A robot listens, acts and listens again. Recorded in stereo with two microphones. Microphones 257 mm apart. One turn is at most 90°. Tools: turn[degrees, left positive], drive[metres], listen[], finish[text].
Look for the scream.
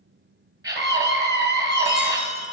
Action: turn[-30]
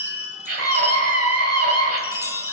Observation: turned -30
Thought: So it is at 135° right.
Action: turn[-90]
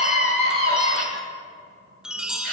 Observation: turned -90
Thought: The scream is now 75° right.
Action: turn[-75]
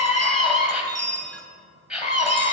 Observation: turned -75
Action: finish[Facing the scream.]